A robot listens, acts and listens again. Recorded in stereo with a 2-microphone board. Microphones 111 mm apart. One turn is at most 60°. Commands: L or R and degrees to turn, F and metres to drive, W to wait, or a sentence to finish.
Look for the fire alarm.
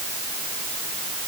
W
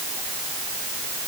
W
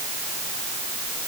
I can't make out a fire alarm to turn to.